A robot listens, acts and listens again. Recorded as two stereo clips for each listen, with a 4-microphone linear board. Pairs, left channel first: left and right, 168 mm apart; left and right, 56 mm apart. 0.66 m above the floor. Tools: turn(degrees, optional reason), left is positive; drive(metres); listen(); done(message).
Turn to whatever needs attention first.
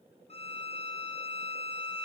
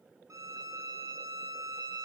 listen()
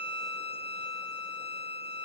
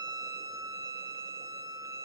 listen()
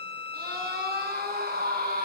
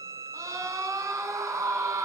turn(degrees=-60, reason="The scream: about 60° right or 120° right.")
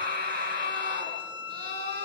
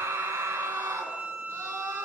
turn(degrees=-60, reason="So it is at 60° right.")
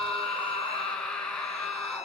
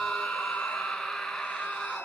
done("Facing the scream, over 4 m away.")